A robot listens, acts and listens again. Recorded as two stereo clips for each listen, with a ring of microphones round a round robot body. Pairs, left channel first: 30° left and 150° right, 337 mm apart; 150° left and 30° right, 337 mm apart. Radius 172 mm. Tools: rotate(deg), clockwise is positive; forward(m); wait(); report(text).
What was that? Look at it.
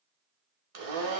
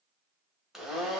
rotate(120)
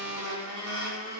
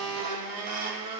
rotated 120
rotate(10)
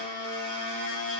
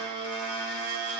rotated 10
report("Found it: a blender, straight ahead, 1 to 2 m away.")